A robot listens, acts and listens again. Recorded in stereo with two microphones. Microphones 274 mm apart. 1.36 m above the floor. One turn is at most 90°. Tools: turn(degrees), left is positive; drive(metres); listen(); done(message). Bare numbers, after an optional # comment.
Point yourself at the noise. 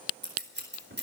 # The scissors: about 40° right or 140° right.
turn(-40)
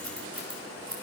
# So it is at 105° right.
turn(-90)
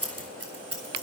# The scissors is now 55° right.
turn(-55)
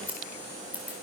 done("Found it: scissors, straight ahead.")